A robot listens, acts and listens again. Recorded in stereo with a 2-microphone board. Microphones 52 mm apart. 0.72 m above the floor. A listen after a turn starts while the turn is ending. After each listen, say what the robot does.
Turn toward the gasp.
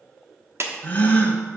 Turn 30° left.
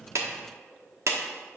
Keep listening.
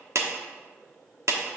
I heard a gasp, but can't make it out now. It was about straight ahead or 120° left.